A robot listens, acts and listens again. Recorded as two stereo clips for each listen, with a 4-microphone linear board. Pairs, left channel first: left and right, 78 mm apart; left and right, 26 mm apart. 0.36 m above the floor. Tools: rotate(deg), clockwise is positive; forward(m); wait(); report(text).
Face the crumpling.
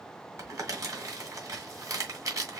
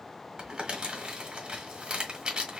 rotate(45)
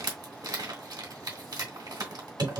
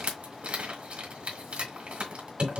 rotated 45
rotate(85)
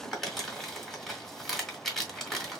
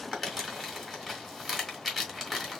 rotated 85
report("Found it: crumpling, straight ahead, 1 to 2 m away.")